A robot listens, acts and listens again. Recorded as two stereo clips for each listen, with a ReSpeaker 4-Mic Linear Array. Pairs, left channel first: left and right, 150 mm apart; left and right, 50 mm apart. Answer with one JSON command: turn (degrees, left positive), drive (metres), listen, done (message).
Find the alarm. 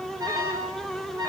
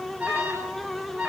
{"turn": -25}
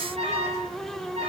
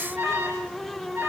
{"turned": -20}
{"turn": -135}
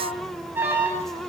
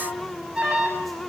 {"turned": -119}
{"turn": -15}
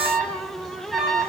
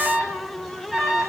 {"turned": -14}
{"done": "Facing the alarm, over 4 m away."}